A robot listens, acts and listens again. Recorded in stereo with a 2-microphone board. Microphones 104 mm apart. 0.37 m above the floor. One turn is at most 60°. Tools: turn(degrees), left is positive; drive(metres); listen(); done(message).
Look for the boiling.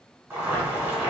turn(degrees=-20)
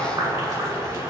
turn(degrees=-60)
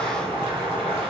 turn(degrees=-60)
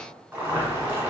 turn(degrees=-20)
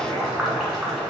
done("Facing the boiling.")